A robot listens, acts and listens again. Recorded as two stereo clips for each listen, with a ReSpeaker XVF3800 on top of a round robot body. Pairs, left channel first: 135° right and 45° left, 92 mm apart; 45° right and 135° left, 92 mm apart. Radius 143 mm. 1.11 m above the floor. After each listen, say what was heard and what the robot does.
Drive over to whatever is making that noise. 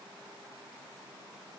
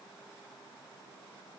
Keep listening.
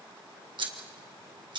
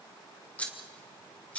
The scissors: 30° left. Turn 30° left.
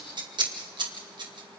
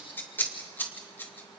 The scissors is now 20° left. Turn 20° left.
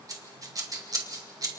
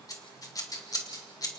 Drive 1.0 m forward.
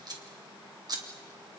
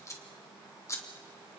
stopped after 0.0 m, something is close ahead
The scissors is now 10° left. Turn 10° left.
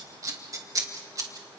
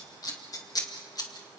Something is in my way. I am facing the scissors but have not reached it.